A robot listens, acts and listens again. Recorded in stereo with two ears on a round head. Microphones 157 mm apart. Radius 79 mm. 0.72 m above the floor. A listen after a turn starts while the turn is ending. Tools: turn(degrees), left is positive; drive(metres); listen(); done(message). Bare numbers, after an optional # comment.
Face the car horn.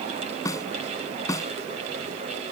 listen()
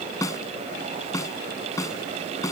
listen()
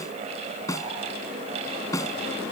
done("I can't make out a car horn to turn to.")